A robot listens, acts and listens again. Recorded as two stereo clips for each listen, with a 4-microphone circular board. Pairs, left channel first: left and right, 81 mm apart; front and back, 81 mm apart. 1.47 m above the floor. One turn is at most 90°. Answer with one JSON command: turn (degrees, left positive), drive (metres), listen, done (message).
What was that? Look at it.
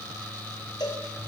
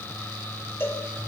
{"turn": 60}
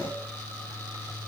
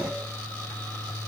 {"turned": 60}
{"listen": true}
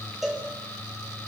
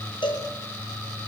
{"done": "Found it: a cowbell, straight ahead."}